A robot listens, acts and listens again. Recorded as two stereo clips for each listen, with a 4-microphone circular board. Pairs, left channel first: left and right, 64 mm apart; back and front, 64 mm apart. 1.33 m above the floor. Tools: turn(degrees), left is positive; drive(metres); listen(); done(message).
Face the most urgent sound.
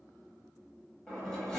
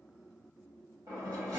listen()
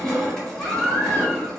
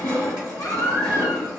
turn(degrees=150)
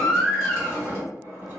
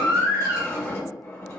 done("Found it: a baby crying, straight ahead, 1 to 2 m away.")